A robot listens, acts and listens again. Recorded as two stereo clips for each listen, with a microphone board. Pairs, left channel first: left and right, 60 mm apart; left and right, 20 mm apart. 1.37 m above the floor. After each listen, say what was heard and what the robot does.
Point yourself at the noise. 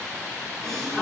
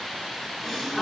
Turn 30° left.
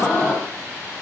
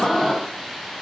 So it is at 140° left. Turn 140° left.
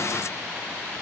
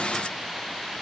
Facing where the gasp came from. I can't hear it now.